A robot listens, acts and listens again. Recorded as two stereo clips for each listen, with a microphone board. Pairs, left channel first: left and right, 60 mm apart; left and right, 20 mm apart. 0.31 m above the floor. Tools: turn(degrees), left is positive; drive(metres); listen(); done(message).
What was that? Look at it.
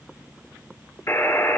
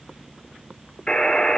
turn(degrees=45)
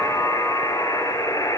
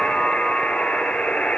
turn(degrees=85)
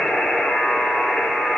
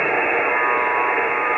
done("Facing the buzzer.")